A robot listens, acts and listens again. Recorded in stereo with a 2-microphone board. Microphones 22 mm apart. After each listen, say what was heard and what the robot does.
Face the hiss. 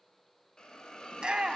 The hiss: about 35° left or 145° left. Turn 35° left.
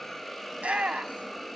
Found it: a hiss, straight ahead.